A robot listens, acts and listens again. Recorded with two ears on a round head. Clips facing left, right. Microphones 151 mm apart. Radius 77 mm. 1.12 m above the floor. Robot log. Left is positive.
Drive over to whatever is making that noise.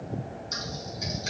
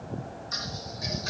note: The typing on a keyboard: about 25° left or 155° left.
cmd yaw +25
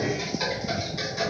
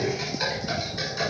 cmd fwd 1.0
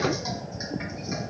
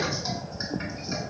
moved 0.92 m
cmd idle
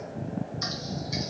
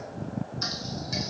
cmd fwd 1.0
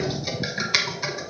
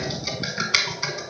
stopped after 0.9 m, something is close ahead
end: Arrived at the typing on a keyboard, straight ahead.